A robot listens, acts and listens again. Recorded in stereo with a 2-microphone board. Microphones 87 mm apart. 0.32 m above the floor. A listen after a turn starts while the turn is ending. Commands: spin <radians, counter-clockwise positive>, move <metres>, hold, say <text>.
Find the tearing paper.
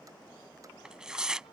spin -0.52
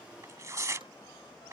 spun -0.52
spin -2.44
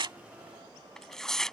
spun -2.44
say Found it: tearing paper, straight ahead.